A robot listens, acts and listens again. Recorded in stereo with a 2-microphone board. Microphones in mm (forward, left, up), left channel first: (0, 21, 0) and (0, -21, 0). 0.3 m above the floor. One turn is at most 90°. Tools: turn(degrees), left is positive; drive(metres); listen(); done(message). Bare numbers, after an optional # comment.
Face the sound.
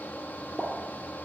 # The pop: about 25° right or 155° right.
turn(-25)
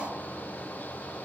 listen()
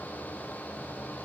done("I heard a pop, but can't make it out now. It was about straight ahead or 130° right.")